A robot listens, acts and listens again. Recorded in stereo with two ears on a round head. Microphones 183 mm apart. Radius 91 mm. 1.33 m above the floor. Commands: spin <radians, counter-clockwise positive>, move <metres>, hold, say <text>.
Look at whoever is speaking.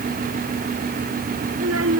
spin -1.57
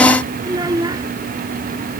spin -0.35
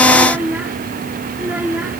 spin -0.17
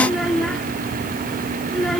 say Found it: a child speaking, straight ahead.